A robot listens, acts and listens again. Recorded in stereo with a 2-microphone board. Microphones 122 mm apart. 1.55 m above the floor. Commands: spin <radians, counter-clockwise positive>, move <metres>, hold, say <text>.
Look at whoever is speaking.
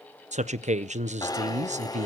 spin -1.22
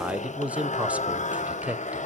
spin -0.17
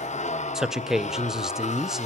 say Found it: a man speaking, straight ahead.